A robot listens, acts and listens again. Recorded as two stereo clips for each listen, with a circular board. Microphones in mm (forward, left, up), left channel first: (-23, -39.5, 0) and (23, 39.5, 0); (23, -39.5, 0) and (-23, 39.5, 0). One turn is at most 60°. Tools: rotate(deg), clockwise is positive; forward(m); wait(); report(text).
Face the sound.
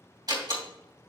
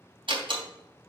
rotate(-60)
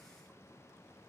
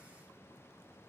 rotate(-45)
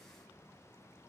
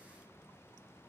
report("I heard a door slam from this way, but can't make it out now.")